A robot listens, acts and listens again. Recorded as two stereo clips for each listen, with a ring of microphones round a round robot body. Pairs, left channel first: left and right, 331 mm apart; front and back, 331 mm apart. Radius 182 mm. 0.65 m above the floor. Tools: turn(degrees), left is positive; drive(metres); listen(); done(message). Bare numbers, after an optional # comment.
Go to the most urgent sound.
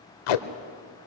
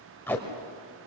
listen()
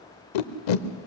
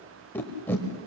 listen()
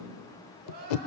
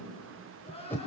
# The crying: 75° right.
turn(-75)
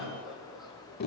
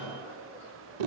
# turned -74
listen()
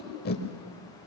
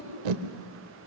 listen()
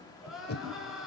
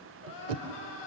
drive(1.0)
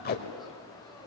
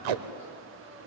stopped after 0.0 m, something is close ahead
listen()
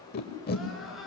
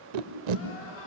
done("Something is in my way. I am facing the crying but have not reached it.")